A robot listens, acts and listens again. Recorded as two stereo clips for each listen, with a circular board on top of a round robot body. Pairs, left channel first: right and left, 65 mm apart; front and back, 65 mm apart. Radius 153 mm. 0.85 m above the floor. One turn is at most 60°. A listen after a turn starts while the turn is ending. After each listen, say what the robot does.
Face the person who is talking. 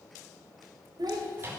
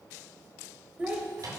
Turn 60° left.
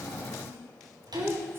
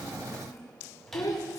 Turn 35° left.
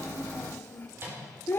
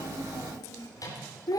Turn 30° right.
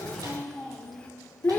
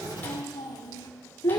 Turn 25° right.
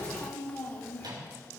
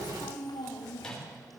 Turn 20° right.
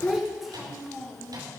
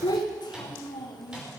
Facing the child speaking, 1 to 2 m away.